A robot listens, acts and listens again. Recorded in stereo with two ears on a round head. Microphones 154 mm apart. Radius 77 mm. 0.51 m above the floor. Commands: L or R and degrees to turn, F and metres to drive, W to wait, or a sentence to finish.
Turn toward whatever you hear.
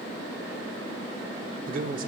R50
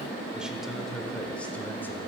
Facing the man speaking, 1 to 2 m away.